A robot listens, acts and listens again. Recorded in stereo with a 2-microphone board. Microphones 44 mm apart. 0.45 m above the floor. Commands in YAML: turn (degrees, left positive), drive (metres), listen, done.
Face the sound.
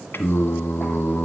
turn: 60
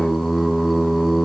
done: "Found it: singing, straight ahead, 1 to 2 m away."